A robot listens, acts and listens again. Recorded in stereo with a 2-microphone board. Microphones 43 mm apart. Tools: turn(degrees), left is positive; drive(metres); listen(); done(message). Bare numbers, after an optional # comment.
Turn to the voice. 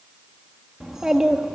turn(-30)
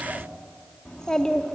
# So it is at 15° left.
turn(15)
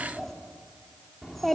done("Found it: a child speaking, straight ahead, 2 to 4 m away.")